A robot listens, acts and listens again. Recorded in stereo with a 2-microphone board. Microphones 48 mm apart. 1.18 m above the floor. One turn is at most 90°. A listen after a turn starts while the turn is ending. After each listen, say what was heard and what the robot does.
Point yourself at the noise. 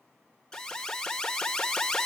Turn 30° left.
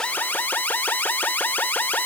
So it is at 140° left. Turn 90° left.
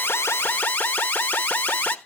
The alarm is now 50° left. Turn 50° left.
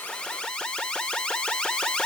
The alarm is now 25° left. Turn 25° left.
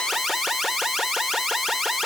Facing the alarm, 1 to 2 m away.